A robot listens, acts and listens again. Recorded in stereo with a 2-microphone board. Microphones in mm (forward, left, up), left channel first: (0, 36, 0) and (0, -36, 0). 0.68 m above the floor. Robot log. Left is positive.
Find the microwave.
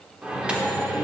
cmd yaw -30
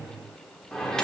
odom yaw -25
note: So it is at 10° left.
cmd yaw +10
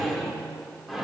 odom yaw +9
end: Facing the microwave, 1 to 2 m away.